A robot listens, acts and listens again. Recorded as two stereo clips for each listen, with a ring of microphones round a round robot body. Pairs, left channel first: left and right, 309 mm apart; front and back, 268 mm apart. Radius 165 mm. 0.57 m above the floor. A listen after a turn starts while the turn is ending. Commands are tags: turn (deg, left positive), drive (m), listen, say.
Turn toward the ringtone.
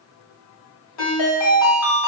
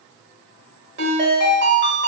<turn deg="130"/>
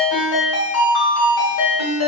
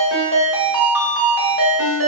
<turn deg="45"/>
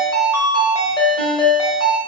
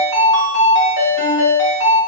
<turn deg="15"/>
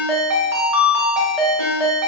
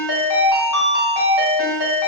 <say>Found it: a ringtone, straight ahead, 1 to 2 m away.</say>